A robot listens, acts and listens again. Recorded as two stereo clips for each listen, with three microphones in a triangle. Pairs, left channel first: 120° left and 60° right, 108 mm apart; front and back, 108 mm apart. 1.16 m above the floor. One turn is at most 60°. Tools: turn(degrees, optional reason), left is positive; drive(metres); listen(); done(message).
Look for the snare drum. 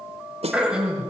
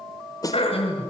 turn(degrees=-55, reason="The snare drum: 55° right.")
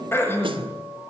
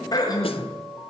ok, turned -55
listen()
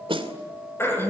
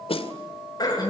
turn(degrees=-25, reason="The snare drum is now 25° right.")
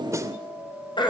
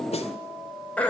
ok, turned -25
done("Facing the snare drum, 2 to 4 m away.")